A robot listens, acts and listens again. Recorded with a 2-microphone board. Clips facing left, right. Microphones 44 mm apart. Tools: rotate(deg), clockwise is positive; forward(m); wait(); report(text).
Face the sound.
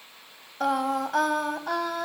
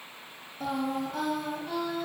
rotate(-70)
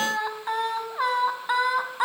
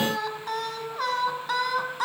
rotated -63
rotate(-20)
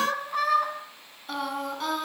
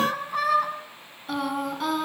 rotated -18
report("Facing the singing.")